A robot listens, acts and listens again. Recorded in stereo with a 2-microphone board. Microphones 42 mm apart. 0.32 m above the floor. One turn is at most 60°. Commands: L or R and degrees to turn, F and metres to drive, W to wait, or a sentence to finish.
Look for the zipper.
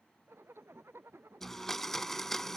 R60
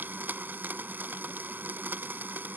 R30
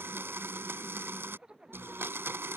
R20
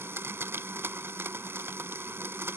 W
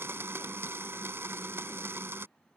W
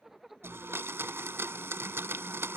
Facing the zipper.